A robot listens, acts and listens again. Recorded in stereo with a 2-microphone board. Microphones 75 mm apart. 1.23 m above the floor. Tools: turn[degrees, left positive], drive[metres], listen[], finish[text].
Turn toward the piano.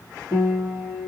Thought: The piano: about 55° right or 125° right.
Action: turn[-55]
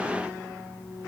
Thought: So it is at 70° right.
Action: turn[-70]
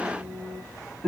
Thought: The piano is now 10° left.
Action: turn[10]
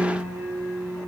Action: finish[Facing the piano, 1 to 2 m away.]